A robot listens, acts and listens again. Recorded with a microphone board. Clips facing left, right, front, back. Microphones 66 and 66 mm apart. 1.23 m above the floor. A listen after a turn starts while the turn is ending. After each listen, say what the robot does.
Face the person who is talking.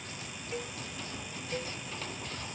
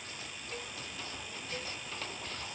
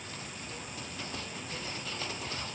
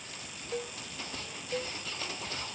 Keep listening.
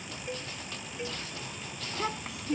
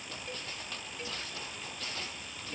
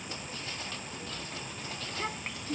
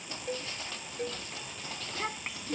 Turn 95° left.
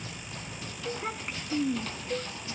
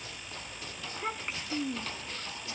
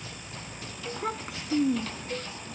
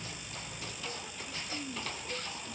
Facing the child speaking.